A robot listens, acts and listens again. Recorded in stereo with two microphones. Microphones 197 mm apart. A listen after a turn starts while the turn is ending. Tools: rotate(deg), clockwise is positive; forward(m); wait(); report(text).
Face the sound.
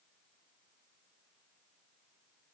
wait()
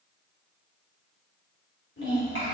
rotate(-90)
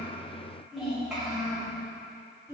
report("Found it: a child speaking, straight ahead.")